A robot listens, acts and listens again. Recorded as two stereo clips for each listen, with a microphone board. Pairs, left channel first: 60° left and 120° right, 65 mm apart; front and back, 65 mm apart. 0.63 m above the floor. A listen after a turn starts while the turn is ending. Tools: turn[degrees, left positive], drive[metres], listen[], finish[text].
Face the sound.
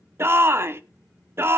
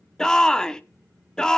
Thought: The shout: 80° right.
Action: turn[-80]
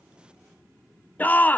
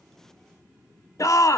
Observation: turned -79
Action: finish[Found it: a shout, straight ahead.]